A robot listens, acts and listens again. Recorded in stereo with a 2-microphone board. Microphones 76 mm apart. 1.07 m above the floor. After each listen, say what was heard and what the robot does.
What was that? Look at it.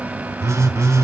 The phone buzzing: about 35° right or 145° right. Turn 35° right.
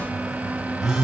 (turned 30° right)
So it is at 10° right. Turn 10° right.
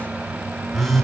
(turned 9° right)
Facing the phone buzzing.